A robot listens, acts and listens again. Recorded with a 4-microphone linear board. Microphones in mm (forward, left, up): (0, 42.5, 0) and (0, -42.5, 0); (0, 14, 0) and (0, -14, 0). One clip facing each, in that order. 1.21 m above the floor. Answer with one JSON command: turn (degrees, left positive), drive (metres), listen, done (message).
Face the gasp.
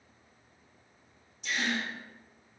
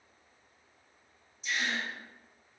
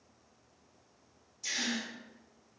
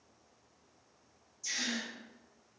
{"turn": 70}
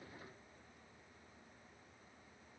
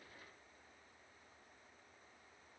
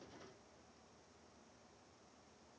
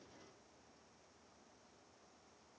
{"listen": true}
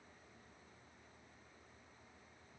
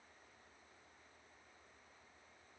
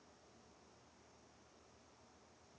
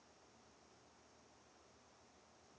{"done": "I heard a gasp, but can't make it out now. It was about straight ahead or 40° left."}